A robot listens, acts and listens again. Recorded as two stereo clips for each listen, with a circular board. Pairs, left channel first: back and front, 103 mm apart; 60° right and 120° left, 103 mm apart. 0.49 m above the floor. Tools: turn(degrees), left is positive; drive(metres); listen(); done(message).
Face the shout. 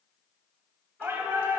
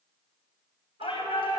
turn(degrees=-65)
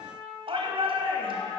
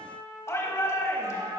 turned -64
done("Found it: a shout, straight ahead.")